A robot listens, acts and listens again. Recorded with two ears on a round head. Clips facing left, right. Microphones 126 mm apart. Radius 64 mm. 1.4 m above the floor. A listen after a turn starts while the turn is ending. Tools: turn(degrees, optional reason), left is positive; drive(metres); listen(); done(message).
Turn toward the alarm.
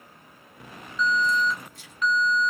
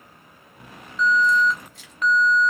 turn(degrees=-45, reason="The alarm: about 45° right or 135° right.")
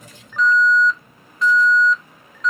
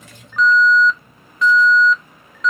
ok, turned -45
turn(degrees=-80, reason="So it is at 80° right.")
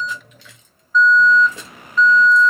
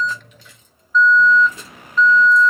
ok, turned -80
done("Facing the alarm, under 1 m away.")